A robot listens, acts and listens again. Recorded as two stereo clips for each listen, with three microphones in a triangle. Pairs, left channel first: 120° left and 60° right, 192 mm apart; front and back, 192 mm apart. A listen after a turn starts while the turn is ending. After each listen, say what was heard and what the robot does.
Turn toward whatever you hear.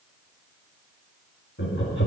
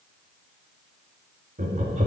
The laughter: 130° left. Turn 130° left.
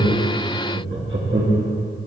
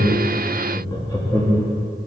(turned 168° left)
The laughter is now 75° right. Turn 75° right.
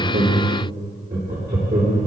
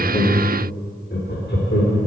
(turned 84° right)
The laughter is now 15° right. Turn 15° right.
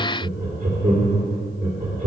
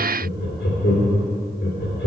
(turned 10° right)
Facing the laughter, 2 to 4 m away.